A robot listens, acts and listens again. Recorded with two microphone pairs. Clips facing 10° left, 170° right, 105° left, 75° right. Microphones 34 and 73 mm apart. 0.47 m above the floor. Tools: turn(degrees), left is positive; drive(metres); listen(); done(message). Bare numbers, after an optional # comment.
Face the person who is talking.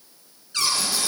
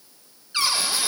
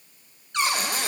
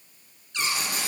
listen()
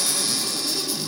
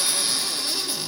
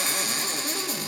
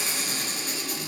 listen()
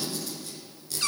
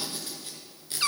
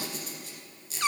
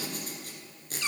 done("I can't make out anyone speaking to turn to.")